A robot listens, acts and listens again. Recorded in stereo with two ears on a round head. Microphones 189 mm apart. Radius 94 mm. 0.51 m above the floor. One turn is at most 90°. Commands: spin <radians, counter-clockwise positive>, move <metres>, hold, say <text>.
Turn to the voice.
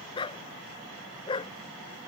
hold
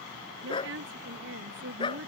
spin -1.13
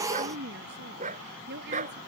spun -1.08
spin -0.96
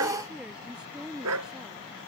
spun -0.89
say Facing the woman speaking.